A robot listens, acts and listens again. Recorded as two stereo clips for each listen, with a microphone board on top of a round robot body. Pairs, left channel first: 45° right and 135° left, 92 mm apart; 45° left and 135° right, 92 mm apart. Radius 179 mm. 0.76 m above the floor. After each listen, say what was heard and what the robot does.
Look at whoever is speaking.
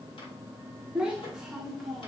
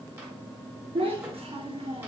The child speaking: 135° right. Turn 135° right.
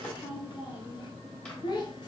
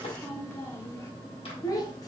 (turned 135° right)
Found it: a child speaking, straight ahead.